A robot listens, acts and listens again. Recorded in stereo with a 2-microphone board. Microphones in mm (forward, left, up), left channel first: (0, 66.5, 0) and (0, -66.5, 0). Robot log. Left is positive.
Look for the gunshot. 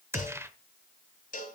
note: The gunshot: about 20° right or 160° right.
cmd yaw -20
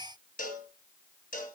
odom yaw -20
cmd idle
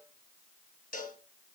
end: I heard a gunshot, but can't make it out now. It was about straight ahead or 140° right.